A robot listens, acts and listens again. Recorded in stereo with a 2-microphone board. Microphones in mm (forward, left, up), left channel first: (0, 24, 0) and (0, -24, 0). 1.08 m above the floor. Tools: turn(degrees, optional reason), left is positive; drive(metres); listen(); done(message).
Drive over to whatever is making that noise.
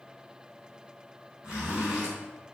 turn(degrees=-20, reason="The zipper: about 20° right or 160° right.")
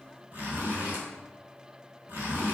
turn(degrees=-140, reason="So it is at 140° right.")
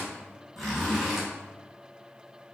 drive(metres=1.0)
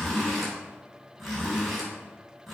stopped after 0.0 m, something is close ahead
done("Blocked. The zipper is further on, straight ahead.")